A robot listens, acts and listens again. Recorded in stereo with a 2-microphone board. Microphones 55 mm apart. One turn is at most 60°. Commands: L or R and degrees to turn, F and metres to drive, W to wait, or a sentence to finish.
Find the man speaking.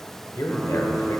L60
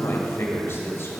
L50
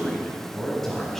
L10
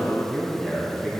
Facing the man speaking, 2 to 4 m away.